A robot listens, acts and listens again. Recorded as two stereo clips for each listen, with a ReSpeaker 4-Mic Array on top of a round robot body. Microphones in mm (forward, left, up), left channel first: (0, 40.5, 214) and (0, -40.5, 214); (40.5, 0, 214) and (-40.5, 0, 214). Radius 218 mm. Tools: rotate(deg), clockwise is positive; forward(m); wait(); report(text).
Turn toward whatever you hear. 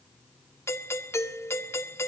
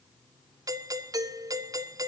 rotate(-145)
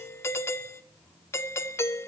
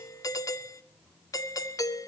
rotate(-40)
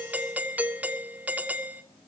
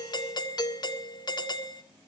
rotate(20)
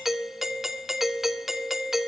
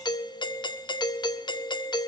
report("Facing the doorbell, 1 to 2 m away.")